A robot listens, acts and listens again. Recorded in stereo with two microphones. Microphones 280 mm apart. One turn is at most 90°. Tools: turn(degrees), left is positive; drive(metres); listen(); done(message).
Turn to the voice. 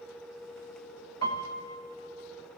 listen()
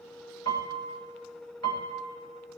listen()
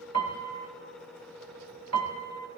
done("I can't make out anyone speaking to turn to.")